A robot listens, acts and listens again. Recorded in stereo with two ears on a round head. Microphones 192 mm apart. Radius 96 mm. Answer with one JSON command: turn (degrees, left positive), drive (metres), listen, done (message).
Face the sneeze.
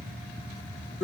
{"listen": true}
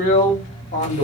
{"listen": true}
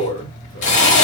{"done": "I can't make out a sneeze, only a drill."}